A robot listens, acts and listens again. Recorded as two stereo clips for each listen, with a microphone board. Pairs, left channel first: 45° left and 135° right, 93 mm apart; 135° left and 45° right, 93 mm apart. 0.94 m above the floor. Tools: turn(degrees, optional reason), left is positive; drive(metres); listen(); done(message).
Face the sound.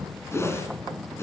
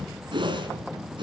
turn(degrees=-15, reason="The whoosh: 15° right.")
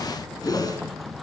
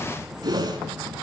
done("Found it: a whoosh, straight ahead.")